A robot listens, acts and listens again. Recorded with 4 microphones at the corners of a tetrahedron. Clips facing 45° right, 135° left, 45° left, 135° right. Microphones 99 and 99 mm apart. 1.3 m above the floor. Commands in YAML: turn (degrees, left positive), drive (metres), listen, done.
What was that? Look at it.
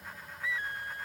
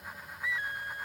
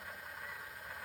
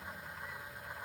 listen: true
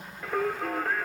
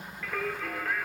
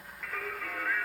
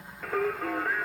turn: -85
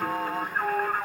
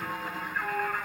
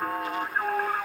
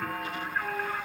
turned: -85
done: "Facing the singing, 1 to 2 m away."